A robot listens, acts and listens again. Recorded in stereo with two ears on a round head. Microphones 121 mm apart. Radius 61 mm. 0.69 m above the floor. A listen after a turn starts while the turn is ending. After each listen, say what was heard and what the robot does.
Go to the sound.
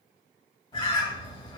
The bird: about 40° left or 140° left. Turn 40° left.
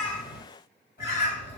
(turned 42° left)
So it is at 90° left. Turn 90° left.
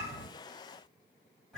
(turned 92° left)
Drive 1.0 m forward.
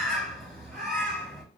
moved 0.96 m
Drive 1.0 m forward.
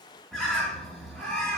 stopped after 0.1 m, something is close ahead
I am next to the bird.